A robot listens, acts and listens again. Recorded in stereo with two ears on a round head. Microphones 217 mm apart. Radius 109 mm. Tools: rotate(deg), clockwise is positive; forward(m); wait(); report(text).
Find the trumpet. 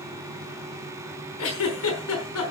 wait()
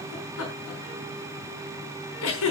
wait()
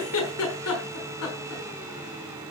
report("I can't make out a trumpet, only a giggle.")